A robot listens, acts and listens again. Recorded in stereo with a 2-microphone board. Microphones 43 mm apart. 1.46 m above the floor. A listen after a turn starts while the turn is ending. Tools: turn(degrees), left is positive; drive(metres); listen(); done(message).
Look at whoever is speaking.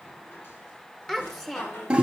turn(degrees=30)
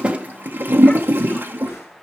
listen()
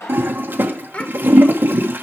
turn(degrees=145)
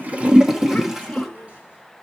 listen()
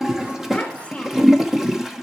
listen()
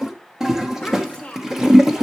turn(degrees=25)
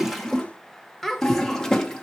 done("Facing the child speaking.")